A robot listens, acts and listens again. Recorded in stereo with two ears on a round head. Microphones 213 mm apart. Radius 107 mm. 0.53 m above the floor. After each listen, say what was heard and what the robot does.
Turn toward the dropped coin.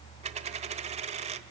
The dropped coin: about 30° right or 150° right. Turn 30° right.
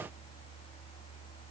Keep listening.
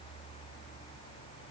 I heard a dropped coin, but can't make it out now. It was about straight ahead or 120° right.